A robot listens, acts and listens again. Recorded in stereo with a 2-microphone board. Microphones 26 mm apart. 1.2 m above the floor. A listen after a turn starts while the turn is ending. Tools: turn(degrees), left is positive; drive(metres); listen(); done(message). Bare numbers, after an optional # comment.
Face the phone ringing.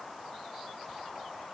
listen()
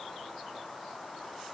listen()
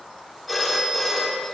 turn(-30)
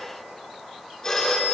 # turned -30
# So it is at 25° left.
turn(25)
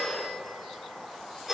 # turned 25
# The phone ringing is now 10° right.
turn(-10)
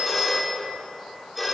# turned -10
done("Facing the phone ringing.")